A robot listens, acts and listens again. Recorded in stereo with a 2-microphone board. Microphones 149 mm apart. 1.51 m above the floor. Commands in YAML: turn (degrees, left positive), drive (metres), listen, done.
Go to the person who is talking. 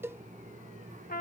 listen: true
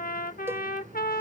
listen: true
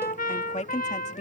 turn: 50
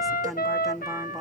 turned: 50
drive: 1.0
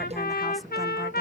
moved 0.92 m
listen: true
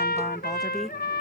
listen: true
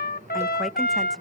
done: "Facing where the woman speaking came from. I can't hear it now. I did not reach it."